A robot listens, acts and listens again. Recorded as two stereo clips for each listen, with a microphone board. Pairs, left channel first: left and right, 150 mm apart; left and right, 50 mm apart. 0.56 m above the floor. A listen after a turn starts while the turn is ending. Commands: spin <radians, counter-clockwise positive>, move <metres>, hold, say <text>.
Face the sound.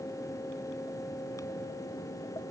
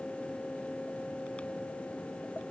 hold
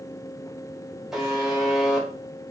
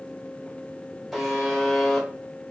spin 0.52
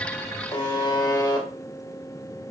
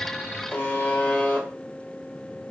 spin 2.62
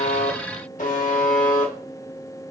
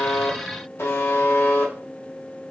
spin 1.05
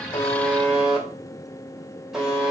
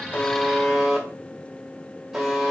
say Found it: a buzzer, straight ahead.